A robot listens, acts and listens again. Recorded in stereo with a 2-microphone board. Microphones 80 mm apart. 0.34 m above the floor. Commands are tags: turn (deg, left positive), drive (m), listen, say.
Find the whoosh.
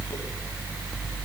<listen/>
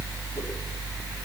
<listen/>
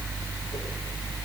<say>I can't make out a whoosh.</say>